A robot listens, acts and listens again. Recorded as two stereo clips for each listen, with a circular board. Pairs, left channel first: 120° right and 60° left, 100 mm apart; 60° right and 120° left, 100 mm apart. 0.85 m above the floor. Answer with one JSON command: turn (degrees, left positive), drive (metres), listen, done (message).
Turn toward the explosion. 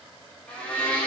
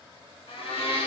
{"listen": true}
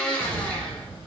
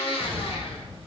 {"turn": 135}
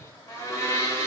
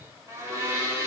{"done": "Facing where the explosion came from. I can't hear it now."}